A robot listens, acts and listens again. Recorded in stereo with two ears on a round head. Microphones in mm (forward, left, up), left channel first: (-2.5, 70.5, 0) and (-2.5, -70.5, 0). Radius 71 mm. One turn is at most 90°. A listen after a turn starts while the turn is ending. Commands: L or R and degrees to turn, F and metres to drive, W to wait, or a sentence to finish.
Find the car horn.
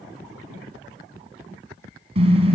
R40
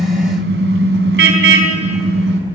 R90
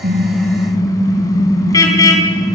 L25
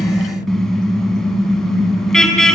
Facing the car horn, 2 to 4 m away.